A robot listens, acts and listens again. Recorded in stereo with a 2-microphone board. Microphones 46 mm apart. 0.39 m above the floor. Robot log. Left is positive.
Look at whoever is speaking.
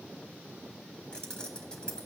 cmd idle
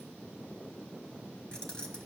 cmd idle
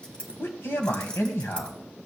note: The man speaking: about 65° left or 115° left.
cmd yaw +65
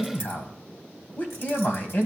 note: So it is at 45° left.
cmd yaw +45
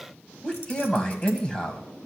note: The man speaking is now 20° left.
cmd yaw +20
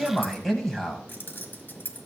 end: Facing the man speaking, 2 to 4 m away.